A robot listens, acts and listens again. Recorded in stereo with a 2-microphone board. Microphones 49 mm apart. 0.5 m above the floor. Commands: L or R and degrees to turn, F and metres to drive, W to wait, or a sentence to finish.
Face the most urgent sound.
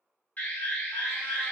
L40
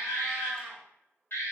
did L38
L95
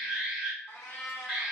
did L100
Facing the alarm.